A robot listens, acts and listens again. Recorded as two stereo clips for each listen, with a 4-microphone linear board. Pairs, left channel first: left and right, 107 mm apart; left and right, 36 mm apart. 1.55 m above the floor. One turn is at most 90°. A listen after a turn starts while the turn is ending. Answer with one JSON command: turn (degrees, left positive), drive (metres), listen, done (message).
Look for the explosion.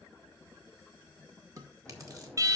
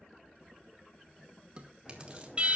{"turn": 30}
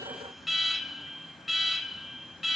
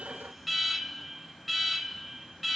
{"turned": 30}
{"listen": true}
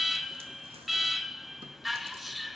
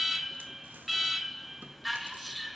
{"done": "I heard an explosion, but can't make it out now. It was about 20° right or 140° left."}